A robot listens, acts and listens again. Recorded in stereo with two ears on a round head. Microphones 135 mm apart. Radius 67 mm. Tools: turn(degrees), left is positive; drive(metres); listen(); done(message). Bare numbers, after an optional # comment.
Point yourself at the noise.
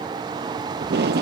turn(-90)
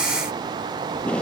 # So it is at 10° left.
turn(10)
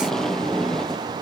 done("Found it: tape being pulled, straight ahead.")